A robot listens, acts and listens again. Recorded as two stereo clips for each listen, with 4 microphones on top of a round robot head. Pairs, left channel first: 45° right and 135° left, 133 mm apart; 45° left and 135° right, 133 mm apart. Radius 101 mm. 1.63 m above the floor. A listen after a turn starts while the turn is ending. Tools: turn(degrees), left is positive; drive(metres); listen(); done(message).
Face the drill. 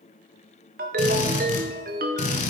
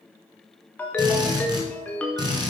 turn(degrees=-75)
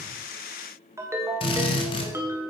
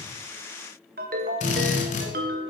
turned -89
turn(degrees=10)
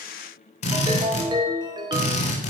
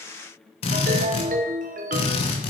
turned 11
done("Facing the drill.")